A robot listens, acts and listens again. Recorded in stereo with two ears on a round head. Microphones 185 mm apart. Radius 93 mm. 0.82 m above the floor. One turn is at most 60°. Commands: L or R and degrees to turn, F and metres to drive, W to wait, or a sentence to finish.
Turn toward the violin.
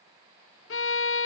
L60
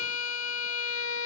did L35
L60
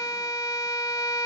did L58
L15
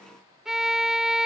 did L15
Facing the violin.